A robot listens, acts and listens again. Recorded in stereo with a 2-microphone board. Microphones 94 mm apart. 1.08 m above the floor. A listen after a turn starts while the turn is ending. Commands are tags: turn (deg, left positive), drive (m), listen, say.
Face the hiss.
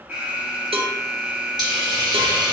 <turn deg="-45"/>
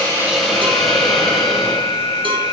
<say>Found it: a hiss, straight ahead.</say>